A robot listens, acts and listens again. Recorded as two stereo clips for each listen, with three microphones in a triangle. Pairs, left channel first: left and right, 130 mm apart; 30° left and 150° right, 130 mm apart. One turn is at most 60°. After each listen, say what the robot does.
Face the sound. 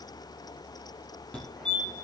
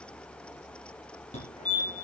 Found it: a fire alarm, straight ahead.